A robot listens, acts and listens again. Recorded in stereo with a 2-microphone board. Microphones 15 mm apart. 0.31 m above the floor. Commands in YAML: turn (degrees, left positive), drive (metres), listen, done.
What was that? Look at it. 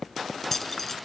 turn: 20
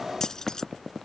turn: 130
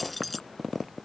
done: "Facing the keys jangling."